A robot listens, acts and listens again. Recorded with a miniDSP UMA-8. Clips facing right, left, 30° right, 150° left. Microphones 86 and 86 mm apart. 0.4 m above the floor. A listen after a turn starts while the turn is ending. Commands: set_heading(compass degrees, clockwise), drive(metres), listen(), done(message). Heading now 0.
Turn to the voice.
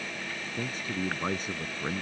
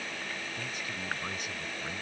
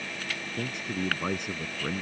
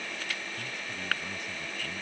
set_heading(40)
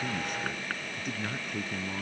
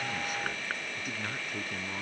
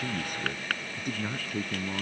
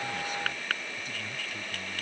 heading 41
done("Facing the man speaking.")